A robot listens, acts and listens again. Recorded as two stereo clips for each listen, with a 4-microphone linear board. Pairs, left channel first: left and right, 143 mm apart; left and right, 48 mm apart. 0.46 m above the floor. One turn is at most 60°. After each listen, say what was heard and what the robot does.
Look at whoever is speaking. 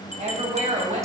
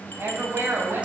The woman speaking: about 55° right or 125° right. Turn 55° right.
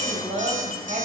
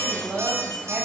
So it is at 65° right. Turn 60° right.
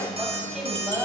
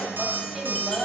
Facing the woman speaking, 2 to 4 m away.